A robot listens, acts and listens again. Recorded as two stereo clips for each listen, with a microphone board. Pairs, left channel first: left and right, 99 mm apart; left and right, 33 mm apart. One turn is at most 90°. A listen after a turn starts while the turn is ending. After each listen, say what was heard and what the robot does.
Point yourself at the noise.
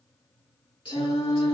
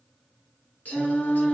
The singing: about 60° left or 120° left. Turn 60° left.
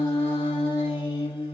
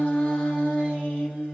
So it is at 50° left. Turn 50° left.
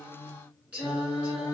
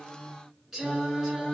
The singing is now 15° right. Turn 15° right.
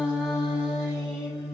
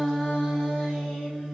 Found it: singing, straight ahead, 2 to 4 m away.